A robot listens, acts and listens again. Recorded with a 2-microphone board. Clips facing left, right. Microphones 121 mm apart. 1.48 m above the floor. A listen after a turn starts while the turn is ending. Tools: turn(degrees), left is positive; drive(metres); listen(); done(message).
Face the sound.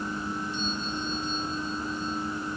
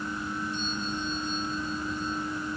listen()
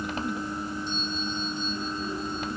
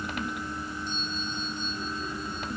listen()
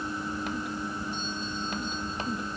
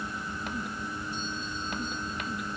done("I can't make out anything to turn to.")